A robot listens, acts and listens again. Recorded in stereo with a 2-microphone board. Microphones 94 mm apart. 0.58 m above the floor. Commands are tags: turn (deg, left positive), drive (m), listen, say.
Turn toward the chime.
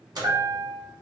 <turn deg="-45"/>
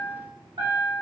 <turn deg="-85"/>
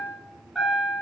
<say>Facing the chime, under 1 m away.</say>